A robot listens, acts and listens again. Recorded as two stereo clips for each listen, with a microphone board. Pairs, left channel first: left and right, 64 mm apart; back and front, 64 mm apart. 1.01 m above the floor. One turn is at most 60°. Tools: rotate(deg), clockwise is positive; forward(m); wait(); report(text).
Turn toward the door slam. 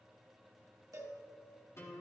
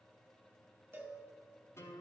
wait()
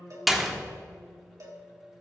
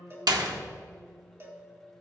report("Facing the door slam.")